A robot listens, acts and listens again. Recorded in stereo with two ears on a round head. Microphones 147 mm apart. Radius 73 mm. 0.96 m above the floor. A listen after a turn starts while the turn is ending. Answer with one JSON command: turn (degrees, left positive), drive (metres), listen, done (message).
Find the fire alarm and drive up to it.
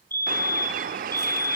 {"turn": 30}
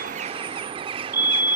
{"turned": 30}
{"turn": -15}
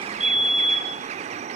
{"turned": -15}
{"drive": 1.0}
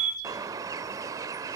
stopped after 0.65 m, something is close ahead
{"turn": -10}
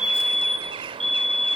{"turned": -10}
{"done": "I am next to the fire alarm."}